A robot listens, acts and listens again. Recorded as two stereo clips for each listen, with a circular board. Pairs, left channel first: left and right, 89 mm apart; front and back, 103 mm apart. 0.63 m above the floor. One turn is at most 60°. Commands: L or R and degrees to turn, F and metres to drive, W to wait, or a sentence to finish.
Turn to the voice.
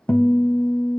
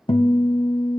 W
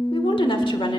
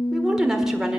L60
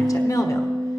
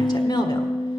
L35
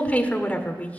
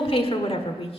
L15
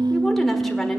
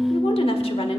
Found it: a woman speaking, straight ahead.